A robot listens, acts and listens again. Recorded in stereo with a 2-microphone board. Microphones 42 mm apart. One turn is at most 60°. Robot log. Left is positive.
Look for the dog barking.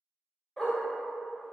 cmd yaw +30
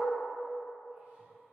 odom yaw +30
cmd idle
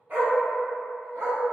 note: So it is at 65° right.
cmd yaw -60
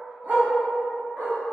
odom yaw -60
note: The dog barking is now 60° right.
cmd yaw -60
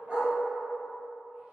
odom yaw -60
note: The dog barking is now 35° right.
cmd yaw -35
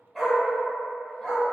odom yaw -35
end: Found it: a dog barking, straight ahead, 1 to 2 m away.